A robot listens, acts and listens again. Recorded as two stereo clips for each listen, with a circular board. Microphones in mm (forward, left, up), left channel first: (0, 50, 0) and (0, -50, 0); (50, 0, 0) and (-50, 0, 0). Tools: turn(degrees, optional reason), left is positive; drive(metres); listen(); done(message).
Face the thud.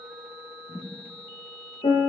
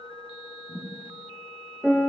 turn(degrees=25, reason="The thud: 25° left.")
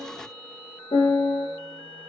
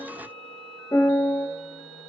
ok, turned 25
done("Facing where the thud came from. I can't hear it now.")